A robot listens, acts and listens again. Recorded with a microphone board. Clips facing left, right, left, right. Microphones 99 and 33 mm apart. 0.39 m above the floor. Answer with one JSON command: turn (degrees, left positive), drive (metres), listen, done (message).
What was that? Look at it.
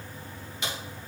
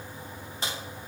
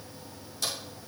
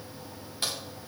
{"turn": -35}
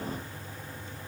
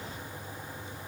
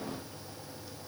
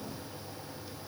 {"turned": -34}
{"listen": true}
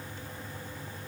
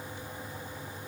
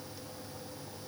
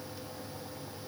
{"done": "I heard a crack, but can't make it out now. It was about straight ahead or 110° right."}